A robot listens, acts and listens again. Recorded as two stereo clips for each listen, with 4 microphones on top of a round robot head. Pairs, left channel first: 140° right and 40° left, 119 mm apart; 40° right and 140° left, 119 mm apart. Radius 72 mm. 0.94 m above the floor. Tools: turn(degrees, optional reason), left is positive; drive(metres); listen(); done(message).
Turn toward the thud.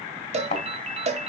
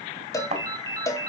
turn(degrees=180, reason="The thud: straight behind.")
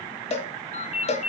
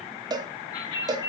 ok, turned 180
done("I heard a thud from this way, but can't make it out now.")